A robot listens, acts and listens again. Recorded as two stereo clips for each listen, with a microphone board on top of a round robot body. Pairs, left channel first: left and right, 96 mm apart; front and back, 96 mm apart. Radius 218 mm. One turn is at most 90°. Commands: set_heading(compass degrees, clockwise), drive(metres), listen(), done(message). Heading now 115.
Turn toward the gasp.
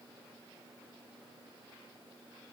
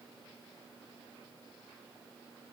listen()
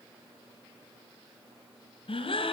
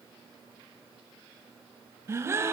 set_heading(25)
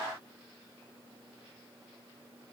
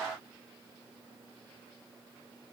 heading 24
set_heading(359)
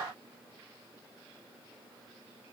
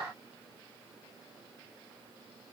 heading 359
done("I heard a gasp from this way, but can't make it out now.")